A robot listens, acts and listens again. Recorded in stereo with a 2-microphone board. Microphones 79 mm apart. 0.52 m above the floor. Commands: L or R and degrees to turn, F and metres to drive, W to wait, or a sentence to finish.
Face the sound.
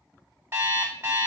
R30
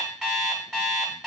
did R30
Facing the alarm clock, 1 to 2 m away.